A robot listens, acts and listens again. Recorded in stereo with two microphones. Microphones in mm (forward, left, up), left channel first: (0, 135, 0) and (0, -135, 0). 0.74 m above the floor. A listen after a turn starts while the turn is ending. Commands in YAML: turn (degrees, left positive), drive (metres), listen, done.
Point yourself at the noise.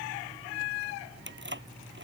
turn: -45
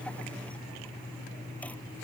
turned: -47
listen: true
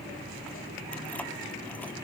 listen: true
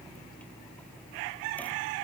done: "I heard keys jangling, but can't make it out now. It was about 5° left or 90° right."